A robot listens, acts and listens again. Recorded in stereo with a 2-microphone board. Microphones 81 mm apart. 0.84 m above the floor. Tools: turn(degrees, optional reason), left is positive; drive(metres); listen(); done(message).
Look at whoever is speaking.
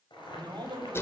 turn(degrees=-65, reason="The man speaking: about 65° right or 115° right.")
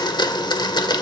listen()
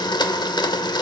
listen()
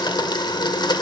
done("I heard a man speaking, but can't make it out now. It was about straight ahead or 50° right.")